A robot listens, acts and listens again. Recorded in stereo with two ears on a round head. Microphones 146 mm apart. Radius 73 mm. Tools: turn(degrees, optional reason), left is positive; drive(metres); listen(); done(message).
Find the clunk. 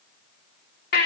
listen()
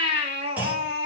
turn(degrees=-30)
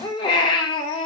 listen()
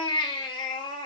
done("I heard a clunk, but can't make it out now. It was about 20° left or 140° right.")